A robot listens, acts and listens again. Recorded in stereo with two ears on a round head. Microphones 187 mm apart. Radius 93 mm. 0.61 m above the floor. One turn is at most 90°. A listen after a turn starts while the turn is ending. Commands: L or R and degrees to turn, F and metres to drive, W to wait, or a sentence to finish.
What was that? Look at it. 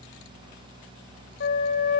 L55
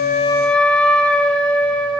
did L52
Found it: a flute, straight ahead.